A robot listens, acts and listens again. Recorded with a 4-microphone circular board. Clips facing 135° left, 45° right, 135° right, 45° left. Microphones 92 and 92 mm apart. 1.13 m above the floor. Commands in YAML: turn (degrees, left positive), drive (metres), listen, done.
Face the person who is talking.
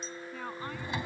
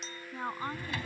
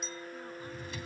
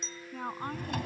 turn: 20
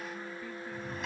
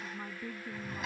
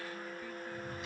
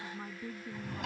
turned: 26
listen: true
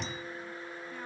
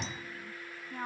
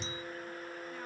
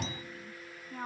done: "Facing the woman speaking."